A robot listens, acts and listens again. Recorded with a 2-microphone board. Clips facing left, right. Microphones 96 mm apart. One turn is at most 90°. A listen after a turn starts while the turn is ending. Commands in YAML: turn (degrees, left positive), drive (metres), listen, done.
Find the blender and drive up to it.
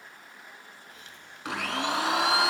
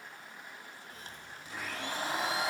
turn: 90
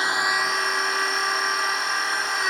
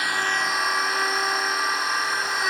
drive: 1.0
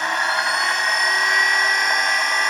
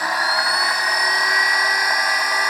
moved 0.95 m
drive: 1.0
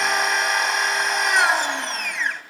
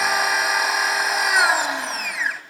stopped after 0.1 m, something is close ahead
done: "Arrived at the blender, straight ahead."